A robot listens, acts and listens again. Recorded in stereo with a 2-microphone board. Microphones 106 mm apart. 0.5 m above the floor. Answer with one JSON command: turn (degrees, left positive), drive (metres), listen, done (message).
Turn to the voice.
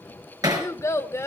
{"turn": 25}
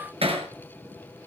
{"listen": true}
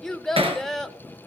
{"done": "Found it: a child speaking, straight ahead, under 1 m away."}